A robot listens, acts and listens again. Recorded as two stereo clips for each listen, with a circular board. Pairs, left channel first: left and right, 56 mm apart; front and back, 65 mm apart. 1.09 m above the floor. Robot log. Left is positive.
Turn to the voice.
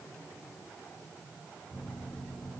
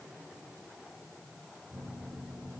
cmd idle
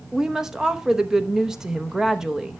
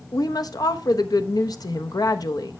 note: The woman speaking: 10° right.
cmd yaw -10
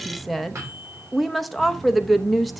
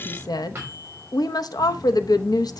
end: Facing the woman speaking.